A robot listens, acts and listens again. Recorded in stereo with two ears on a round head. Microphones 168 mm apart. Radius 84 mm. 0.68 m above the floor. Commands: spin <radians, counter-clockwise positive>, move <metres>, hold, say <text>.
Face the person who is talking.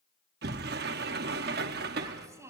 spin -0.26
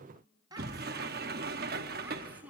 spin -0.52
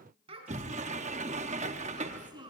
spin -0.44
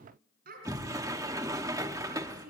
spin -2.27
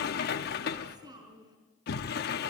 spin -0.35
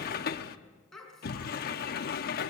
say Facing the child speaking, 2 to 4 m away.